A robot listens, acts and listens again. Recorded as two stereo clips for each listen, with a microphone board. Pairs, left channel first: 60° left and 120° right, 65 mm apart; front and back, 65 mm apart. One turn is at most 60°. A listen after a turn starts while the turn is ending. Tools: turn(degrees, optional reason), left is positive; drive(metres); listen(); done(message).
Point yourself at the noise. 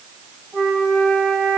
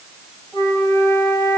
turn(degrees=-10, reason="The flute: 10° right.")
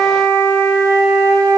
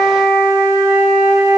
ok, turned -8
done("Facing the flute.")